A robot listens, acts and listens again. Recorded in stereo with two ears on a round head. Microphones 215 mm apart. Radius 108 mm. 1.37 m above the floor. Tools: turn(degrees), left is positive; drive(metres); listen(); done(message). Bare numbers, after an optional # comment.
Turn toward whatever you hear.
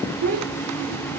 # The child speaking: about 70° right or 110° right.
turn(-70)
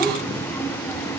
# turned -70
listen()
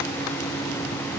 listen()
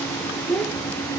done("Facing the child speaking.")